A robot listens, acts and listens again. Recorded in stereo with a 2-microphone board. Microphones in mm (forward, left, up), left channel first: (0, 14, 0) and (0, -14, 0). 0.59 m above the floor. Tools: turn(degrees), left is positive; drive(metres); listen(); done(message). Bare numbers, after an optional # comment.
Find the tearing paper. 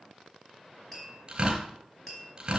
# The tearing paper: about 40° right or 140° right.
turn(-40)
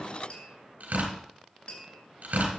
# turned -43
# So it is at 100° right.
turn(-100)
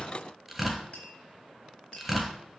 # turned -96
done("Found it: tearing paper, straight ahead.")